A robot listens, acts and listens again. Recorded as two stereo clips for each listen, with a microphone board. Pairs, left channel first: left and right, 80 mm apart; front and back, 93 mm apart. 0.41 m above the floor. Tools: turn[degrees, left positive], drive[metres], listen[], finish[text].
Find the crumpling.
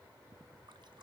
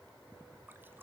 Action: listen[]
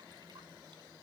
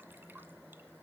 Action: listen[]
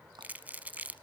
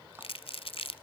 Thought: The crumpling: 20° right.
Action: turn[-20]
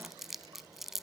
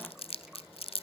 Action: finish[Facing the crumpling, under 1 m away.]